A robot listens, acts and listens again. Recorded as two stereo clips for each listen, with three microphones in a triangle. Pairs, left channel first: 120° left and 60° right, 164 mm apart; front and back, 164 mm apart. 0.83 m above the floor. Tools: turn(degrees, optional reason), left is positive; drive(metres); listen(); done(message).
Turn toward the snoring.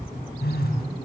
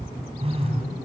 listen()
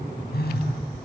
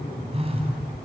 listen()
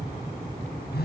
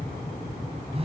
done("I can't make out snoring to turn to.")